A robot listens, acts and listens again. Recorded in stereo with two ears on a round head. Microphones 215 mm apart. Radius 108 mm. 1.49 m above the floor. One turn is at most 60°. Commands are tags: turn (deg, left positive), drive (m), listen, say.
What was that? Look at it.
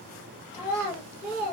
<turn deg="15"/>
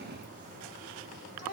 <turn deg="60"/>
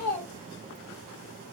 <turn deg="60"/>
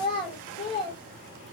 <turn deg="25"/>
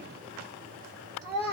<say>Found it: a child speaking, straight ahead.</say>